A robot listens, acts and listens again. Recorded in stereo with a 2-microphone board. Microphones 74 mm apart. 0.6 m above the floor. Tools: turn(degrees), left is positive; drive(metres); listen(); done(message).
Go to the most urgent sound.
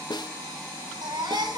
turn(degrees=-90)
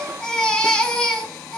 turn(degrees=10)
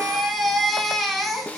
drive(metres=1.0)
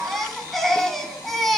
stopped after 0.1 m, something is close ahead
done("Blocked. The baby crying is further on, straight ahead.")